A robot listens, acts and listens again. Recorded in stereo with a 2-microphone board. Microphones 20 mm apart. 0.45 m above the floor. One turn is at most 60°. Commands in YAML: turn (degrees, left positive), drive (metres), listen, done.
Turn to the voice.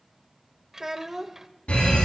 turn: -25
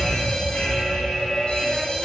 listen: true
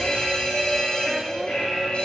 listen: true
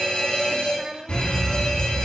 turn: -60
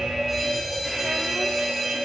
turn: -60
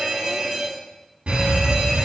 turn: -10
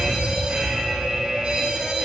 done: "I heard a child speaking from this way, but can't make it out now."